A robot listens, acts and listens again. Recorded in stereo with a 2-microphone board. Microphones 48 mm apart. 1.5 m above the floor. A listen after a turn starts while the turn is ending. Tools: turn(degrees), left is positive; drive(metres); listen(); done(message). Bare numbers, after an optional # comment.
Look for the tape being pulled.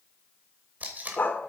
# The tape being pulled: about 35° right or 145° right.
turn(-35)
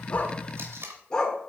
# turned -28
# So it is at 110° right.
turn(-110)
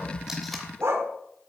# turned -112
done("Facing the tape being pulled, 2 to 4 m away.")